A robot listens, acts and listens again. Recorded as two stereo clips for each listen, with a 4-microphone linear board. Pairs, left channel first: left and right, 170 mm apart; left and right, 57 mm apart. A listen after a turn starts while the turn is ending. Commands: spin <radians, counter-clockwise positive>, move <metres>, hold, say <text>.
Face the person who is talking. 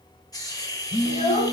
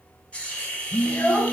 spin 0.70
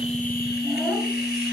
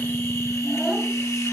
hold
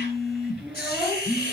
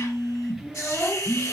say Facing the child speaking, 2 to 4 m away.